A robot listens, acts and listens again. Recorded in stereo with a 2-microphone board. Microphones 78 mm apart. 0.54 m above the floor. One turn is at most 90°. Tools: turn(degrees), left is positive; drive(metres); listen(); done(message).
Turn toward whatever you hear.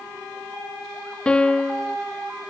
turn(degrees=30)
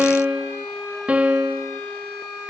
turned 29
turn(degrees=-15)
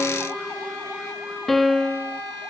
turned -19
done("Facing the piano, under 1 m away.")